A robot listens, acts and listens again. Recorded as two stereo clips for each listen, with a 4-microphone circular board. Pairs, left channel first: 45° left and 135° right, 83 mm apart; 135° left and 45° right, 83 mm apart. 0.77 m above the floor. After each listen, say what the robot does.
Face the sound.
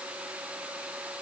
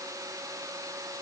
Keep listening.
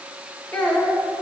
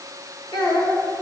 Turn 120° left.
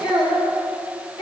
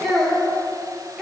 Turn 50° left.
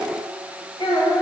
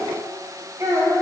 Turn 15° left.
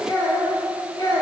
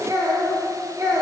Found it: a child speaking, straight ahead.